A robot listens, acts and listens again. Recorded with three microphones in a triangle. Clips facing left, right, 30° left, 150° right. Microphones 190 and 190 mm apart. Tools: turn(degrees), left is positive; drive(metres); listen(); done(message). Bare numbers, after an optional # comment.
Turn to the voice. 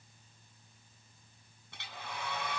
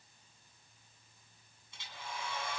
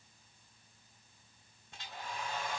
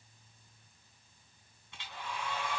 listen()
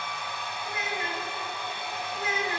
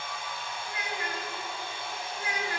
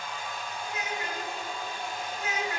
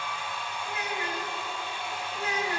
# The child speaking: 155° left.
turn(155)
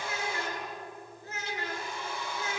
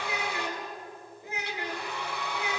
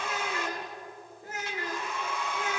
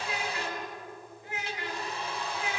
# The child speaking is now 15° right.
turn(-15)
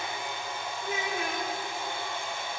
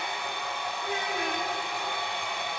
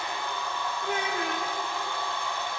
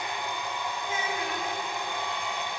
done("Facing the child speaking, over 4 m away.")